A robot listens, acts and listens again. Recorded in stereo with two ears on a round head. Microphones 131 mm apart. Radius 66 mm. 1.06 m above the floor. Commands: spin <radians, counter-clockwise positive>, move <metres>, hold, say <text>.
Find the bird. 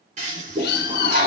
spin 1.22
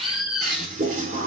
say Found it: a bird, straight ahead.